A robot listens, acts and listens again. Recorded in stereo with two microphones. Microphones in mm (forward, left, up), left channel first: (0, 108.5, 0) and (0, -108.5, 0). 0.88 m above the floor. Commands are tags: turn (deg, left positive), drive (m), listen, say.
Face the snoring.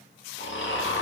<turn deg="60"/>
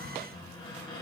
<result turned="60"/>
<listen/>
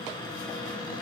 <listen/>
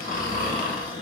<turn deg="45"/>
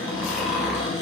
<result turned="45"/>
<say>Found it: snoring, straight ahead.</say>